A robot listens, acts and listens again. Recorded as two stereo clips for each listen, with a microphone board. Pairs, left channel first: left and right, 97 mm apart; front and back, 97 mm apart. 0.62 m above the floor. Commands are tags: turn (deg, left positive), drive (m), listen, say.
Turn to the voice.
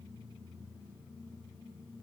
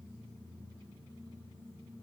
<listen/>
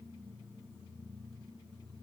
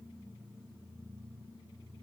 <listen/>
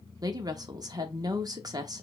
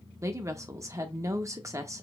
<turn deg="-130"/>
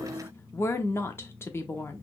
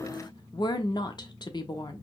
<turn deg="30"/>
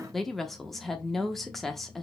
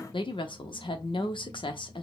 <say>Facing the woman speaking.</say>